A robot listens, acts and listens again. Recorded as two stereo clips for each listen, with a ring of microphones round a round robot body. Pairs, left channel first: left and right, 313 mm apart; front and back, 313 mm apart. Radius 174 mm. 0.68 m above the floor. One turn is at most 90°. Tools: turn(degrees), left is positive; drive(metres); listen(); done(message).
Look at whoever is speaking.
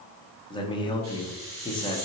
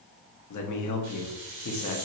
turn(degrees=15)
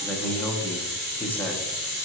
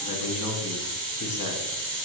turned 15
done("Found it: a man speaking, straight ahead, 1 to 2 m away.")